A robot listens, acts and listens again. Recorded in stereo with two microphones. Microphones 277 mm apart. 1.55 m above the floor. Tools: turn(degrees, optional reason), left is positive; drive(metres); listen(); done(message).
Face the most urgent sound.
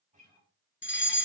turn(degrees=40, reason="The fire alarm: about 40° left or 140° left.")
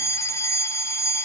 turn(degrees=10, reason="So it is at 10° left.")
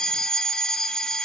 done("Facing the fire alarm, 1 to 2 m away.")